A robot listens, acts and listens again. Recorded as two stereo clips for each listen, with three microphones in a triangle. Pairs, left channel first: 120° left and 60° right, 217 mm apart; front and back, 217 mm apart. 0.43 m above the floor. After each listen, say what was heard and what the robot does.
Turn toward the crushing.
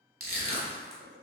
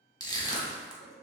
The crushing: 70° right. Turn 70° right.
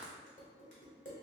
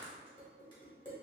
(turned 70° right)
Keep listening.
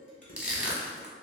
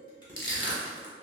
The crushing is now 25° left. Turn 25° left.
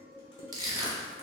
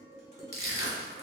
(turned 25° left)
The crushing is now 15° left. Turn 15° left.
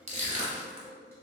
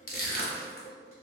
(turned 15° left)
Facing the crushing.